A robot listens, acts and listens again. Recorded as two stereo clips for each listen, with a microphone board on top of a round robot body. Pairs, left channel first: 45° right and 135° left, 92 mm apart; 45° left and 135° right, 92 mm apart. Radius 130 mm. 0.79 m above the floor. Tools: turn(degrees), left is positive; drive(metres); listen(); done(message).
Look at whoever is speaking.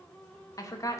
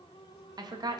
turn(degrees=-95)
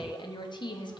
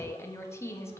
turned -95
turn(degrees=-15)
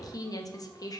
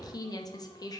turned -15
done("Facing the woman speaking, 1 to 2 m away.")